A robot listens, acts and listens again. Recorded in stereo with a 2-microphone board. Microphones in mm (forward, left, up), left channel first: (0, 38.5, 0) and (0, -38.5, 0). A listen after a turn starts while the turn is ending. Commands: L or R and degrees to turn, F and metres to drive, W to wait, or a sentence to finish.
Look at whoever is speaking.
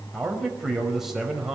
R30
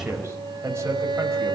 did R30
R145
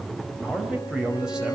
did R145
R10
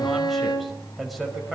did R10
Found it: a man speaking, straight ahead.